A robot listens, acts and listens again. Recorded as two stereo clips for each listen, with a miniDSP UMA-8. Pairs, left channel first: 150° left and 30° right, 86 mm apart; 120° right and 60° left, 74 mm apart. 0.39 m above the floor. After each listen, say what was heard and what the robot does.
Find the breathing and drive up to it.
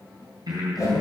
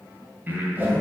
Drive 1.0 m forward.
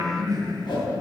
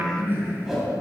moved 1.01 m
The breathing is now 10° left. Turn 10° left.
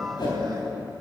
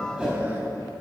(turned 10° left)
Keep listening.
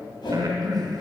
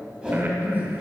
Drive 1.0 m forward.
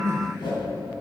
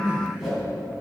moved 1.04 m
Drive 1.0 m forward.
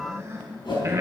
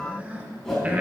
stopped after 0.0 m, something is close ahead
The breathing is now 10° left. Turn 10° left.
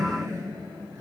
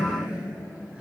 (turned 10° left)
I am next to the breathing.